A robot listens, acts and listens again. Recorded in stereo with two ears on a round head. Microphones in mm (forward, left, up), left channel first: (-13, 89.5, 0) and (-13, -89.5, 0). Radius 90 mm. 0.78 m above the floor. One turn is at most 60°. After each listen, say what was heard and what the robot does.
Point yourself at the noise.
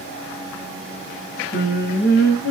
The singing: about 60° left or 120° left. Turn 60° left.
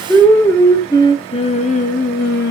So it is at 55° left. Turn 55° left.
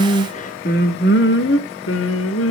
The singing is now 65° left. Turn 60° left.
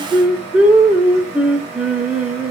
Facing the singing.